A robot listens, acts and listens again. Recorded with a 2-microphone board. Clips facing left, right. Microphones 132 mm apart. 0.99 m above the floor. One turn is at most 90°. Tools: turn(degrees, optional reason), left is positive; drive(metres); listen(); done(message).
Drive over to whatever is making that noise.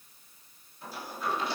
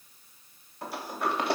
turn(degrees=-60, reason="The sliding door: about 60° right or 120° right.")
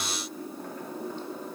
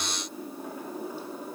turn(degrees=-10, reason="So it is at 10° right.")
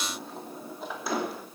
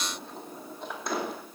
drive(metres=1.0)
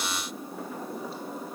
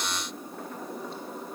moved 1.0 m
drive(metres=1.0)
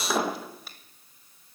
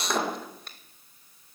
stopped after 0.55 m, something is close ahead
done("Arrived at the sliding door, straight ahead.")